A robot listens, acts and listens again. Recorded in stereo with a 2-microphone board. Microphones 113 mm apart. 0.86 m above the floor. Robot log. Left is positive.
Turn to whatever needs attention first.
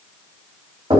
cmd idle
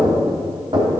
cmd idle
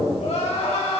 cmd yaw +90
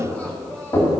note: So it is at 10° left.
cmd yaw +10
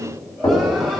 cmd idle
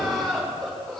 end: Facing the crying.